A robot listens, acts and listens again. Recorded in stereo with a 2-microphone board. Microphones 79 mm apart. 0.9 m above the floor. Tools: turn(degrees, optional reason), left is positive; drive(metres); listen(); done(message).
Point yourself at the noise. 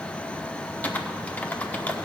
turn(degrees=20, reason="The typing on a keyboard: about 20° left or 160° left.")
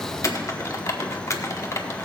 turn(degrees=140, reason="So it is at 140° left.")
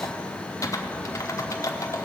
turn(degrees=40, reason="The typing on a keyboard is now 40° left.")
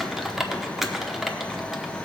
done("Facing the typing on a keyboard, under 1 m away.")